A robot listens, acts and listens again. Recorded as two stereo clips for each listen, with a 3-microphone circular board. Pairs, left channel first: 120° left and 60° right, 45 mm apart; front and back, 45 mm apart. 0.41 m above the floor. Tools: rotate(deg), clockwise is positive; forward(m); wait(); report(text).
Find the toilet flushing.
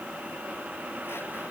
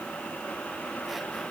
wait()
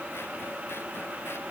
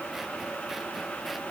wait()
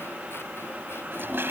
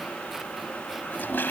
rotate(35)
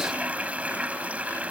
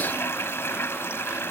report("Facing the toilet flushing.")